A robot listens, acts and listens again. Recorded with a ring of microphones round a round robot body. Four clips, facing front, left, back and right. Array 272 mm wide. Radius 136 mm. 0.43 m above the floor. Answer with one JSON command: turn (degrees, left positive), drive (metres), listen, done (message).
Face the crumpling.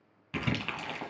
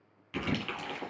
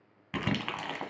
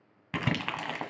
{"turn": -110}
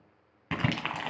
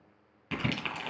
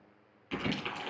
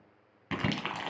{"turn": -15}
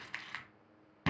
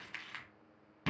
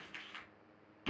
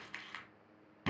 {"done": "Found it: crumpling, straight ahead."}